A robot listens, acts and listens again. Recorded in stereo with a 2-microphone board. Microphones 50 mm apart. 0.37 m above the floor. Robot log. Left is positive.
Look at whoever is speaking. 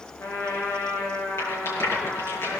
cmd idle
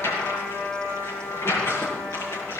cmd idle
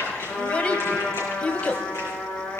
note: The child speaking: about 25° left or 155° left.
cmd yaw +25
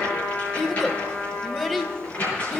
end: Found it: a child speaking, straight ahead.